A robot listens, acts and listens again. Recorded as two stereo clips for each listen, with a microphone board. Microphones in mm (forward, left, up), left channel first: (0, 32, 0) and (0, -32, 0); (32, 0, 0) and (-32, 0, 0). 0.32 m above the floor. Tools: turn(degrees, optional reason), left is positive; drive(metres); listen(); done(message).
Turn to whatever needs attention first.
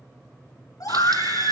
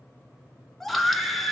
turn(degrees=85, reason="The scream: 85° left.")
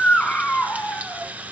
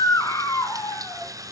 turn(degrees=20, reason="The scream is now 20° left.")
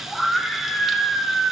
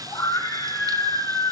done("Found it: a scream, straight ahead.")